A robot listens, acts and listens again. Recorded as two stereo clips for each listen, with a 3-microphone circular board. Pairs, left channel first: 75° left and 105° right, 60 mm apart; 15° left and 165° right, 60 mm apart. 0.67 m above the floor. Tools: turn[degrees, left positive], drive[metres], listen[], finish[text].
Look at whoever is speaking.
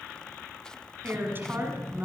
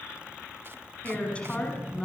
Thought: The woman speaking: 55° right.
Action: turn[-55]
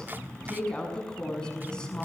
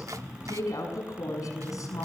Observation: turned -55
Action: finish[Found it: a woman speaking, straight ahead, over 4 m away.]